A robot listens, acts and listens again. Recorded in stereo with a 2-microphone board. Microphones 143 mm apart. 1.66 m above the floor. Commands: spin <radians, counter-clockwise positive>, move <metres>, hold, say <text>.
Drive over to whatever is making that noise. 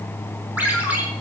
spin -0.52
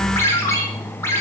spin 0.35
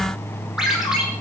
move 1.0
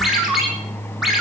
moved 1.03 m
move 1.0
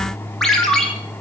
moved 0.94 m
move 1.0
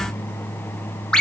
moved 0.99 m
move 1.0
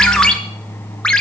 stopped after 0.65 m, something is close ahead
say I am next to the ringtone.